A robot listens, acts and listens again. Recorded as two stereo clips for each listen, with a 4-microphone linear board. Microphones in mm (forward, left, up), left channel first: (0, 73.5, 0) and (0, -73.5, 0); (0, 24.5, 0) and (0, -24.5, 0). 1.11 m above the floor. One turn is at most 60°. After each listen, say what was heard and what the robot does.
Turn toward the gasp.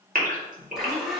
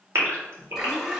The gasp: about 65° right or 115° right. Turn 60° right.
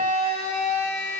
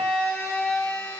Keep listening.
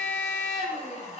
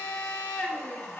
I heard a gasp, but can't make it out now. It was about 5° right or 55° right.